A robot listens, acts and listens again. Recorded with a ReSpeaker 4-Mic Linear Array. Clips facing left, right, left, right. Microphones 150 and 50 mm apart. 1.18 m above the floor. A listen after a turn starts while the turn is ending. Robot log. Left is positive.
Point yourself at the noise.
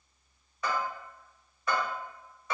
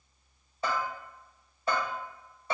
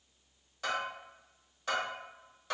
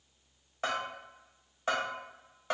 note: The bell: about 30° right or 150° right.
cmd yaw -30
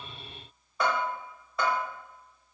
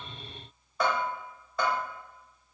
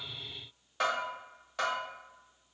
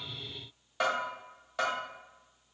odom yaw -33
end: Facing the bell.